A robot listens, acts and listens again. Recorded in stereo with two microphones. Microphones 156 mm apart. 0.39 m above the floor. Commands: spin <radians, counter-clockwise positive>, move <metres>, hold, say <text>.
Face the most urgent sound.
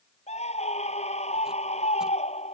spin 0.87
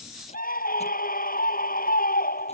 spin 1.40
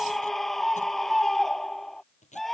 say Found it: a scream, straight ahead.